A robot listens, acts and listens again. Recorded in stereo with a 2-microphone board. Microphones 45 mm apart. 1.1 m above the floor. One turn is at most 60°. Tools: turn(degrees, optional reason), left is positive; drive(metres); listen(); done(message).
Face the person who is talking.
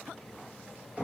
listen()
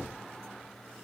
listen()
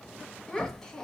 turn(degrees=30)
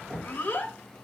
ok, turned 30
turn(degrees=60, reason="So it is at 140° left.")
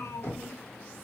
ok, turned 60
turn(degrees=60, reason="The child speaking is now 70° left.")
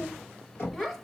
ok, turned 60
done("Found it: a child speaking, straight ahead, under 1 m away.")